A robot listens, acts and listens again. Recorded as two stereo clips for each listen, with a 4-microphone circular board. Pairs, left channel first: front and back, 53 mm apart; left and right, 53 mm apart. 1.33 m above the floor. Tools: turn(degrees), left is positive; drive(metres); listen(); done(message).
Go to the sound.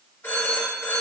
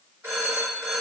turn(degrees=-45)
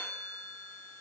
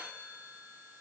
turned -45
listen()
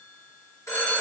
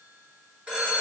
turn(degrees=-25)
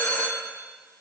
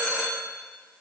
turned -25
turn(degrees=-10)
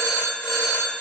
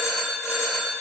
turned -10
drive(metres=1.0)
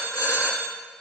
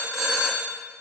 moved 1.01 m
turn(degrees=-10)
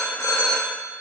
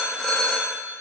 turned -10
drive(metres=1.0)
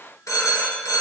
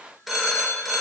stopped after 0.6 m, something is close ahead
done("I am next to the phone ringing.")